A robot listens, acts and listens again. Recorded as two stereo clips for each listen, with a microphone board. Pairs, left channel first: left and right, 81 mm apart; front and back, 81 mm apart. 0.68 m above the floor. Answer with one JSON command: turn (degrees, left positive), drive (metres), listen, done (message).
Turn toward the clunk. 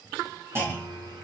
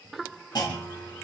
{"turn": -30}
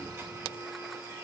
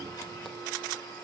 {"done": "I heard a clunk from this way, but can't make it out now."}